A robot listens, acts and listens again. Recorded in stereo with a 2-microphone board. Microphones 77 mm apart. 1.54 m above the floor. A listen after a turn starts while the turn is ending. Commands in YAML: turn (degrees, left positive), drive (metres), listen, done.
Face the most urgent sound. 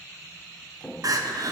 turn: -55
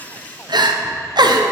turn: -75
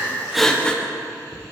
turn: 10
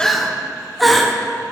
done: "Facing the crying."